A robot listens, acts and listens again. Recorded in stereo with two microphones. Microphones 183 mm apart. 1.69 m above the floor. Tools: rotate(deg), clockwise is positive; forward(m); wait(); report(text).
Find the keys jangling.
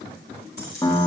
rotate(55)
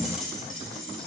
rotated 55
report("Facing the keys jangling.")